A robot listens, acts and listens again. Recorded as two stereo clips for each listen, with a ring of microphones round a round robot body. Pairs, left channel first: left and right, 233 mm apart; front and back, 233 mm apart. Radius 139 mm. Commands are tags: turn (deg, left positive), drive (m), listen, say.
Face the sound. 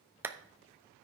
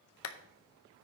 <turn deg="-10"/>
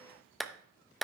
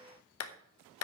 <say>Found it: a clap, straight ahead, under 1 m away.</say>